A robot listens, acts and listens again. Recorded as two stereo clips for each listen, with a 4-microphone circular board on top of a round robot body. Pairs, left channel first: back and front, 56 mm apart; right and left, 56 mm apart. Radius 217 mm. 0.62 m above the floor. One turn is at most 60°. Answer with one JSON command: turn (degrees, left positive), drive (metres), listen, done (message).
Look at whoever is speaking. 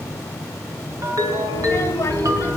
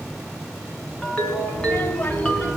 {"turn": -60}
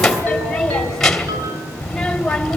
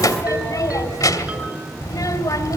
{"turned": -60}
{"turn": -60}
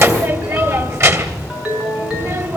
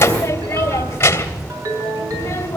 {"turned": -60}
{"turn": -40}
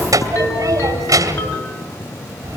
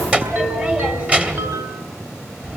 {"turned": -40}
{"turn": 20}
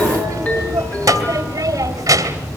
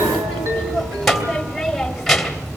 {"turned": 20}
{"done": "Found it: a child speaking, straight ahead, 2 to 4 m away."}